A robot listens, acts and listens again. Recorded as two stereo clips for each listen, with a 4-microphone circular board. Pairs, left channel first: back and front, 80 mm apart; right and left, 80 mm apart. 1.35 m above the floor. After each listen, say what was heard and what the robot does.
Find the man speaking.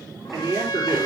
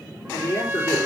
The man speaking: 45° right. Turn 45° right.
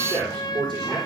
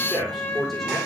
Found it: a man speaking, straight ahead, over 4 m away.